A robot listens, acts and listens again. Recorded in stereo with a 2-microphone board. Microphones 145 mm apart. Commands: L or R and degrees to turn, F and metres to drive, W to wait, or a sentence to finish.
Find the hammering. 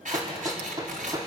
R25
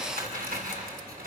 W
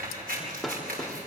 Facing the hammering.